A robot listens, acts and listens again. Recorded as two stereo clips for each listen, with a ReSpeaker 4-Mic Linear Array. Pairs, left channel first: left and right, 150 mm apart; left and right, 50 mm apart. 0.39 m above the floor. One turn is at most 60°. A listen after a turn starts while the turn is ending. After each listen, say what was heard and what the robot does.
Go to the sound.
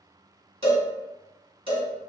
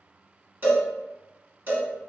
The cowbell: about 40° right or 140° right. Turn 40° right.
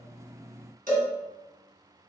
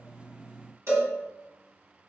So it is at 100° right. Turn 60° right.
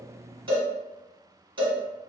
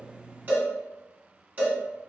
The cowbell is now 35° right. Turn 35° right.
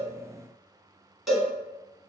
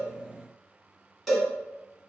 Drive 1.0 m forward.
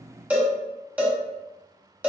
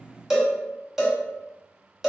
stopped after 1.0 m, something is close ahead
The cowbell is now 10° right. Turn 10° right.
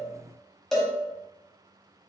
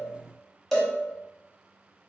I am next to the cowbell.